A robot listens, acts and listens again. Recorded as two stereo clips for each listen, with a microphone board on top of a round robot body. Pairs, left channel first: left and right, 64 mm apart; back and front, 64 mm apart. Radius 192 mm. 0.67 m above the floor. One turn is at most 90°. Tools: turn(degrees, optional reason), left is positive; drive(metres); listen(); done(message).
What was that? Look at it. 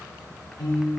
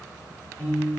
turn(degrees=90, reason="The piano: 120° left.")
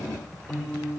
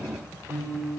turn(degrees=55, reason="The piano is now 55° left.")
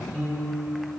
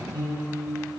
turn(degrees=10, reason="The piano is now 10° left.")
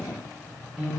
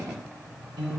done("Found it: a piano, straight ahead, 1 to 2 m away.")